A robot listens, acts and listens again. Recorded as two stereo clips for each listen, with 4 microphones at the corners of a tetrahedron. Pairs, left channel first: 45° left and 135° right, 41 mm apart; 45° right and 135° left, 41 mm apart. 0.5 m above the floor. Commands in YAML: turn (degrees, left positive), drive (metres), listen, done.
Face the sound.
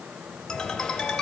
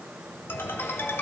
turn: -25
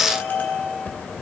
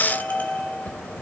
done: "Facing the ringtone."